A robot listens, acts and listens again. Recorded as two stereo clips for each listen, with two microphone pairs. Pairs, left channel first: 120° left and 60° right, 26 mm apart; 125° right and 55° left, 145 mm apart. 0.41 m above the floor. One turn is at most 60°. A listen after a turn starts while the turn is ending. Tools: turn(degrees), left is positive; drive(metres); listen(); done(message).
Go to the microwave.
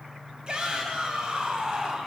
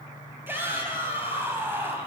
listen()
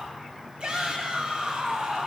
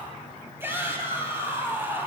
listen()
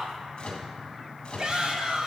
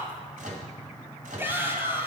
turn(degrees=60)
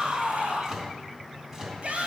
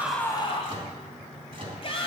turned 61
drive(metres=1.0)
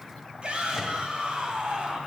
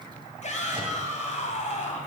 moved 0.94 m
listen()
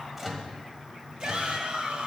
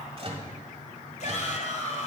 turn(degrees=15)
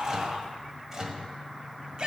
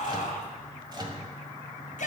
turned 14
drive(metres=1.0)
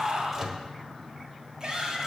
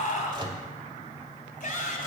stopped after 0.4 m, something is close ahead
done("I am next to the microwave.")